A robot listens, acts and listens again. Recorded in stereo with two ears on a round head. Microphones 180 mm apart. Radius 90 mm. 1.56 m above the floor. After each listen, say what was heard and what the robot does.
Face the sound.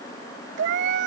The cat meowing: about 60° right or 120° right. Turn 60° right.
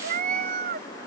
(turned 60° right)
So it is at 45° right. Turn 45° right.
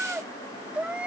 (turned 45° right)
Found it: a cat meowing, straight ahead.